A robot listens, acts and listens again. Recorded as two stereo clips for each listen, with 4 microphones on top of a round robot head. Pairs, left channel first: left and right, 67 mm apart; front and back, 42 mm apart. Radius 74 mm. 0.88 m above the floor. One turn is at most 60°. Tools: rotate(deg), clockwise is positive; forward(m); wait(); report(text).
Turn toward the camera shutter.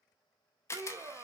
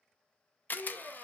rotate(-40)
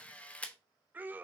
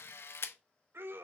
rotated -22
rotate(-20)
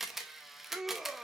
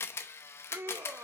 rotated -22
report("Facing the camera shutter.")